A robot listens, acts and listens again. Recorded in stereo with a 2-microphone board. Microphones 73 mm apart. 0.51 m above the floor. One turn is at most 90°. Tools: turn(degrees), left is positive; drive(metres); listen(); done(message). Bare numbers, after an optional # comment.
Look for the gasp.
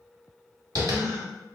# The gasp: about 45° right or 135° right.
turn(-45)
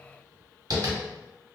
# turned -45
listen()
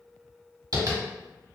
done("I heard a gasp, but can't make it out now. It was about straight ahead or 90° right.")